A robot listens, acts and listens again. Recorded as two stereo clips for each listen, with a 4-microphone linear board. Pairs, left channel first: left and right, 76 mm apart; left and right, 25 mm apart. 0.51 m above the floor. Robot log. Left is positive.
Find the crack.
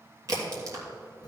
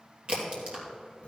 note: The crack: about 50° right or 130° right.
cmd yaw -50
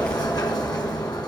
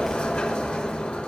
cmd idle
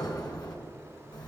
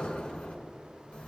end: I heard a crack, but can't make it out now. It was about straight ahead or 80° right.